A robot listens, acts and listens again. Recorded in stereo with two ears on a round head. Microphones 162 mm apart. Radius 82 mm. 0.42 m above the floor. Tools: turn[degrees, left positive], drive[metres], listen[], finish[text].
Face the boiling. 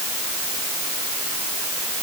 Action: listen[]
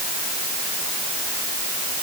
Action: listen[]
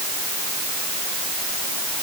Action: finish[I can't make out boiling.]